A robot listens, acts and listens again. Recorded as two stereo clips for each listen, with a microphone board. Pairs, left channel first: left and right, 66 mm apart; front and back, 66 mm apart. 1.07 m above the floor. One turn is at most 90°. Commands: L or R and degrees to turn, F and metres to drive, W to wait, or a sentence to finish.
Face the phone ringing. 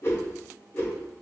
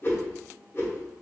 W
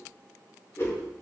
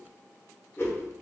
W
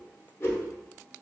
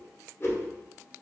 I can't make out a phone ringing, only a whoosh.